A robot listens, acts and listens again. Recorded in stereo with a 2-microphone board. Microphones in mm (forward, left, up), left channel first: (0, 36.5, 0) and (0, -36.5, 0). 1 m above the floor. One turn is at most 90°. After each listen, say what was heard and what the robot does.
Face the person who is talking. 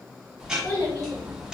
The child speaking: about 70° left or 110° left. Turn 70° left.
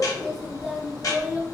Facing the child speaking.